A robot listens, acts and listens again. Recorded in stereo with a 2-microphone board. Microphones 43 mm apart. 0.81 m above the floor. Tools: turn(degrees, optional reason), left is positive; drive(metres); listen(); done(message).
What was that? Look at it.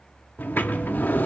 turn(degrees=45, reason="The sliding door: about 45° left or 135° left.")
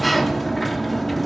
done("Facing the sliding door, under 1 m away.")